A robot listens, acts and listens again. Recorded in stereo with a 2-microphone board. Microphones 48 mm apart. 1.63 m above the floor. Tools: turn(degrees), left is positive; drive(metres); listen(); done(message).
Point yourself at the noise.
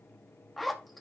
turn(degrees=30)
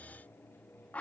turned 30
turn(degrees=150)
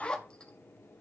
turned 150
turn(degrees=20)
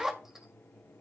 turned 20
turn(degrees=-10)
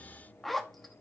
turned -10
done("Facing the zipper, 1 to 2 m away.")